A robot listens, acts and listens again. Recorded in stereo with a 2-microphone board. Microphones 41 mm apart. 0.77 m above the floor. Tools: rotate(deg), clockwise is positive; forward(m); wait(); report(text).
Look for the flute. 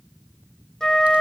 rotate(-30)
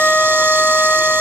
rotate(-135)
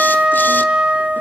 rotate(30)
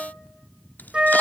rotate(25)
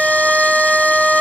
rotate(25)
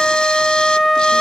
report("Found it: a flute, straight ahead, under 1 m away.")